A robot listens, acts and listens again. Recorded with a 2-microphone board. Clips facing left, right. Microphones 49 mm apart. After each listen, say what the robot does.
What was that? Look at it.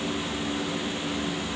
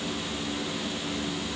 Keep listening.
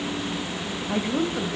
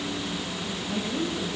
Turn 35° left.
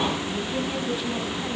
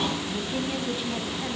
Keep listening.
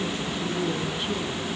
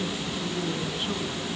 Keep listening.
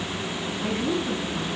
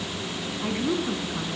Turn 10° right.
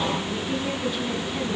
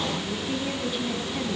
Keep listening.
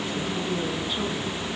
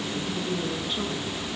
Keep listening.
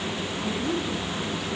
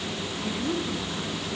Facing the woman speaking, over 4 m away.